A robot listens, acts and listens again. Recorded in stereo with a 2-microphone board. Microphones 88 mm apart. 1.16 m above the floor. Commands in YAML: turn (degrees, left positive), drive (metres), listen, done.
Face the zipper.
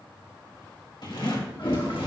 turn: 55
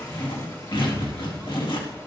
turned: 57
turn: 65
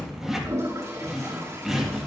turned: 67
done: "Found it: a zipper, straight ahead."